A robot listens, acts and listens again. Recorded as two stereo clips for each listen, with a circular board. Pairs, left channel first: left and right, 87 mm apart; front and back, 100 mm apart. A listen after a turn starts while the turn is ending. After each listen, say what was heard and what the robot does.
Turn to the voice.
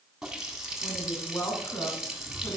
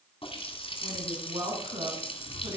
The woman speaking: 145° left. Turn 145° left.
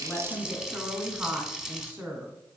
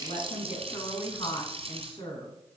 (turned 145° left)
The woman speaking is now 25° right. Turn 25° right.
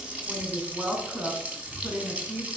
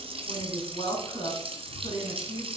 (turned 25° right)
The woman speaking is now 15° right. Turn 15° right.
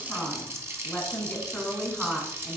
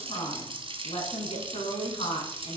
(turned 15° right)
Facing the woman speaking, 2 to 4 m away.